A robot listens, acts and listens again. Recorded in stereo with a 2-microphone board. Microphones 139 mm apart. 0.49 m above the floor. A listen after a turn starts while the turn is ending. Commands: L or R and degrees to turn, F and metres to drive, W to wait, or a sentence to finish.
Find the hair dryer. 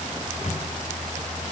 W
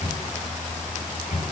W
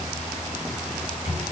I can't make out a hair dryer, only a microwave.